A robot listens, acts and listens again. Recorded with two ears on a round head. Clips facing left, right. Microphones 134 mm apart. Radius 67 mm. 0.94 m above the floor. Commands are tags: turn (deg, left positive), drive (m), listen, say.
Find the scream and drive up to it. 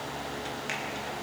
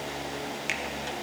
<listen/>
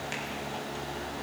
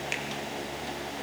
<listen/>
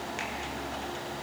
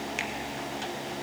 <say>I can't make out a scream, only a finger snap.</say>